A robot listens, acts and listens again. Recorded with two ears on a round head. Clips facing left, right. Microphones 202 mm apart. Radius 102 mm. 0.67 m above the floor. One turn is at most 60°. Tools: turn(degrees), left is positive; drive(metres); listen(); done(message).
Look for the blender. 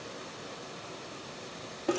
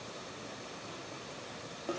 listen()
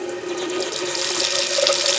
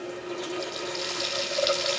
listen()
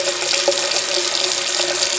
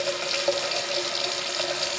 done("I can't make out a blender to turn to.")